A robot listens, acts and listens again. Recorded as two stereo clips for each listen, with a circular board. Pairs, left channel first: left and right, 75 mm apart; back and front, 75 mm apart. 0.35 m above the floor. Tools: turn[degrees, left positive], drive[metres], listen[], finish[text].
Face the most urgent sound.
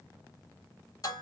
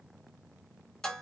Action: listen[]
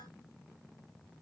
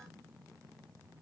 Action: listen[]
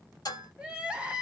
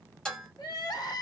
Thought: The crying: 165° right.
Action: turn[-165]
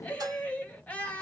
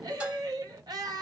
Thought: The crying is now 20° left.
Action: turn[20]
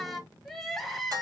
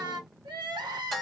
Action: finish[Facing the crying.]